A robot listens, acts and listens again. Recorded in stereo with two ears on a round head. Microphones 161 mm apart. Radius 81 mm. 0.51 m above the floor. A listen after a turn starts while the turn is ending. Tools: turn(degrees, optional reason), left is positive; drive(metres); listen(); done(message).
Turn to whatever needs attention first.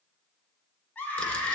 turn(degrees=30)
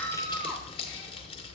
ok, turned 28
listen()
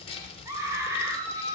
turn(degrees=-15, reason="So it is at 15° right.")
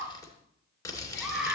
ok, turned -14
done("Facing the scream.")